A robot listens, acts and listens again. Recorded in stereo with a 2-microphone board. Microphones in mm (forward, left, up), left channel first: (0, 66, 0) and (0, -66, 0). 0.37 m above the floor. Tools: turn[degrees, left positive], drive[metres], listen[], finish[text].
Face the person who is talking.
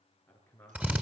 Thought: The man speaking: about 15° left or 165° left.
Action: turn[15]
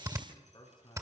Thought: So it is at 150° left.
Action: turn[150]
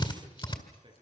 Thought: The man speaking is now 45° right.
Action: turn[-45]
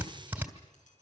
Action: listen[]
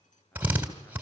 Thought: The man speaking is now 10° left.
Action: turn[10]
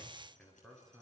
Action: finish[Facing the man speaking, over 4 m away.]